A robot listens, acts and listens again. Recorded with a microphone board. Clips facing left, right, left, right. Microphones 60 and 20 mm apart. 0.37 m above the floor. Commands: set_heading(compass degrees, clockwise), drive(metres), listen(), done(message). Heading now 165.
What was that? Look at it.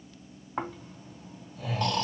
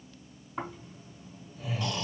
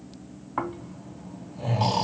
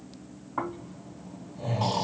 set_heading(105)
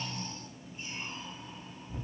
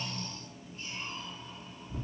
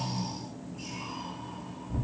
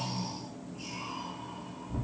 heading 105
set_heading(85)
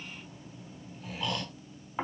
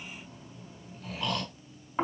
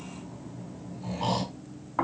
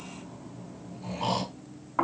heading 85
done("Facing the snoring, 2 to 4 m away.")